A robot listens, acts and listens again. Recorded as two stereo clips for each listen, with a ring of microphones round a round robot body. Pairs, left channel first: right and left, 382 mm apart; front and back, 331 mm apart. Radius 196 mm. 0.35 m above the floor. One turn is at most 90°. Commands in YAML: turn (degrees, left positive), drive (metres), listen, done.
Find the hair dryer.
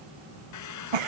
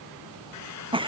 turn: -45
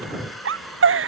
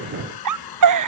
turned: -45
done: "Found it: a hair dryer, straight ahead."